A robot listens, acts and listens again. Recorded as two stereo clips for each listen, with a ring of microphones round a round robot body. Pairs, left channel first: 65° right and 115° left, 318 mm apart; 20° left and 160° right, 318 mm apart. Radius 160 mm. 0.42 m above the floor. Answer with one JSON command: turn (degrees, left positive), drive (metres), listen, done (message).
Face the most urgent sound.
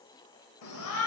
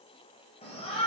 {"turn": -45}
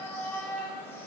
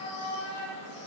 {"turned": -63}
{"turn": 15}
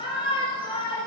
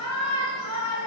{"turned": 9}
{"done": "Found it: a shout, straight ahead, 2 to 4 m away."}